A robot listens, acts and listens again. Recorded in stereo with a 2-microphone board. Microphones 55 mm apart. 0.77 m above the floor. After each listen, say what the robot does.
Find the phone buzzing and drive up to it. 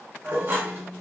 Turn 90° right.
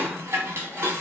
Keep listening.
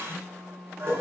Drive 1.0 m forward.
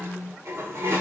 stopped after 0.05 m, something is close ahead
Blocked. The phone buzzing is further on, straight ahead.